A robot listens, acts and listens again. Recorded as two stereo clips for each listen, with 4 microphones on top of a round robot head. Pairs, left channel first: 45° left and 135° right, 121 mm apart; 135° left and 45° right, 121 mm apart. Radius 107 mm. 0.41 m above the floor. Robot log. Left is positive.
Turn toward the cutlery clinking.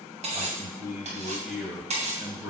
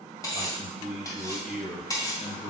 note: The cutlery clinking: 160° right.
cmd yaw -160
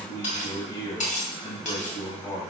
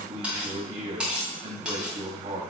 note: The cutlery clinking is now 35° left.
cmd yaw +35
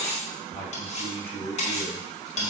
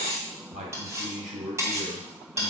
note: The cutlery clinking is now 20° left.
cmd yaw +20
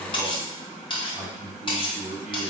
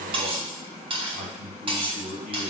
end: Found it: cutlery clinking, straight ahead, 2 to 4 m away.